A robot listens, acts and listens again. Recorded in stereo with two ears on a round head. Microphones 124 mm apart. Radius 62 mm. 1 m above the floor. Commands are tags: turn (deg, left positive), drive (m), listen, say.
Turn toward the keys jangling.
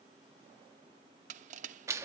<listen/>
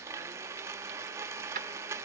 <turn deg="-65"/>
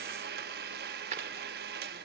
<turn deg="-50"/>
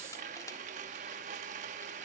<listen/>
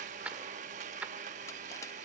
<turn deg="-10"/>
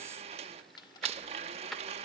<say>Found it: keys jangling, straight ahead.</say>